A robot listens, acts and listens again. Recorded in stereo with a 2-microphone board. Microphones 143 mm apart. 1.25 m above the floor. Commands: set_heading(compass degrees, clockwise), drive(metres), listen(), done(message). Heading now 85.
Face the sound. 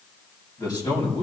set_heading(55)
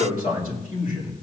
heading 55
set_heading(300)
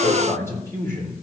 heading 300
set_heading(285)
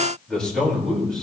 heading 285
done("Found it: a man speaking, straight ahead.")